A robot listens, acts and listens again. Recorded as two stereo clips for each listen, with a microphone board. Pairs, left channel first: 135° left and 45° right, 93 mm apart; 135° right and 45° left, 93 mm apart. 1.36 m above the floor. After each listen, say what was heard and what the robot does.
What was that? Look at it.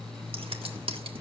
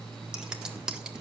The scissors: 35° right. Turn 35° right.
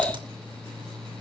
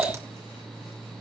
The scissors is now 10° right. Turn 10° right.
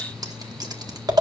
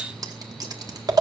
Facing the scissors, 1 to 2 m away.